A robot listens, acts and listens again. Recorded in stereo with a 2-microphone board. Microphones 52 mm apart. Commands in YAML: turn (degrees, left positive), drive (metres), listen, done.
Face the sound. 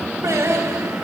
turn: -90
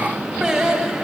turn: -15
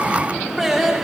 done: "Found it: singing, straight ahead, over 4 m away."